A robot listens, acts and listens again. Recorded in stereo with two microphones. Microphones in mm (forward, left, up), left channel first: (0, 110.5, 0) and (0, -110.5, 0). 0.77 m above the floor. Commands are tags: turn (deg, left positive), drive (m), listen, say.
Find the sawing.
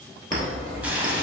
<turn deg="25"/>
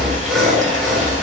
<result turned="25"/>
<say>Facing the sawing.</say>